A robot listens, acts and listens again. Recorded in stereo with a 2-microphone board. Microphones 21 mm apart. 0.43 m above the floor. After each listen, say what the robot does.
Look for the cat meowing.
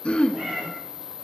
Turn 75° right.
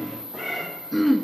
Turn 20° right.
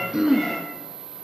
Turn 15° left.
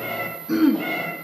Turn 25° left.
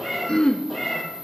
Found it: a cat meowing, straight ahead.